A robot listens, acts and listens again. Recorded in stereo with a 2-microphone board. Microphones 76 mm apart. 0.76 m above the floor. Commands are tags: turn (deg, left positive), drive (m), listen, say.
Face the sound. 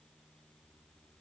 <listen/>
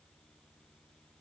<listen/>
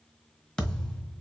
<turn deg="30"/>
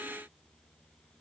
<listen/>
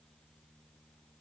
<say>I heard a thud, but can't make it out now. It was about 20° right or 140° left.</say>